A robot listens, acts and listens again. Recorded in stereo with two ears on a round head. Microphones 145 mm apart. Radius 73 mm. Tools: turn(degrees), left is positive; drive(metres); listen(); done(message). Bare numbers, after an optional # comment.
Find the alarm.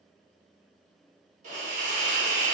listen()
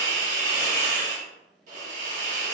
listen()
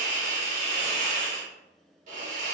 done("I can't make out an alarm to turn to.")